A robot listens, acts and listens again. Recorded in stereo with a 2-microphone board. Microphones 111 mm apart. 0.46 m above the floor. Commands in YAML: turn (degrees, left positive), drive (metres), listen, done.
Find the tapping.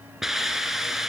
listen: true
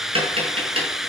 turn: -60
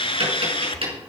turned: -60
turn: -60
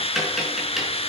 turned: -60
done: "Found it: tapping, straight ahead."